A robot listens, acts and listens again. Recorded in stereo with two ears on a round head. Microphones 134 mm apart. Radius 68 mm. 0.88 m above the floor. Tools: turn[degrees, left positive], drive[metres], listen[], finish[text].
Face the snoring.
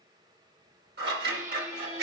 Action: listen[]
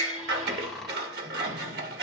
Action: turn[30]
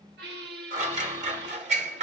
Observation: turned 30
Action: listen[]
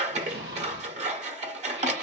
Action: listen[]
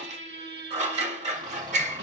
Action: finish[I heard snoring, but can't make it out now. It was about 25° right or 145° left.]